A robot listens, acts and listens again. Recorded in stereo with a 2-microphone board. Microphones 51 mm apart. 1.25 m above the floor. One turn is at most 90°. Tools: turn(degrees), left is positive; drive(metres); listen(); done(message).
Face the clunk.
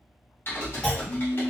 turn(degrees=15)
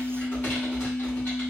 listen()
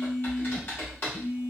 done("I heard a clunk, but can't make it out now. It was about straight ahead or 150° left.")